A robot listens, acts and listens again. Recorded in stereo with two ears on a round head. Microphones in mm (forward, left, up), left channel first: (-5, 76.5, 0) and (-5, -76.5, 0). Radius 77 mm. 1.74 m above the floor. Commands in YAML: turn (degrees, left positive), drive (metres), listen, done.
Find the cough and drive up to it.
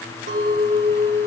listen: true
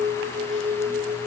listen: true
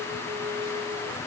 done: "I can't make out a cough to turn to."